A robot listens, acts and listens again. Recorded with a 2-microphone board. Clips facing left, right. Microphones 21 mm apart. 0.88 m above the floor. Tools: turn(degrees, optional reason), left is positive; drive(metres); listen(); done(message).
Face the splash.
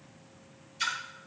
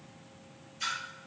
turn(degrees=70, reason="The splash: about 70° left or 110° left.")
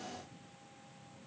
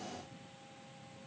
listen()
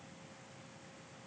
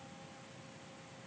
done("I heard a splash, but can't make it out now. It was about straight ahead or 40° left.")